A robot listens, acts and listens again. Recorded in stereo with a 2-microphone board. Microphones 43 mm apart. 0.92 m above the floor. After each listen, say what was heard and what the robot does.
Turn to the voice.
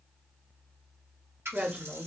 The woman speaking: about 35° right or 145° right. Turn 35° right.
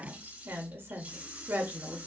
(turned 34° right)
So it is at 110° right. Turn 110° right.
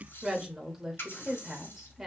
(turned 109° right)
Facing the woman speaking.